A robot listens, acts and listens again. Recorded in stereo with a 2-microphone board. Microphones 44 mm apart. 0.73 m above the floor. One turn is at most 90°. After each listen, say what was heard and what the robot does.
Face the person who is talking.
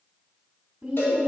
The woman speaking: about 20° right or 160° right. Turn 20° right.
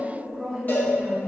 Found it: a woman speaking, straight ahead, 1 to 2 m away.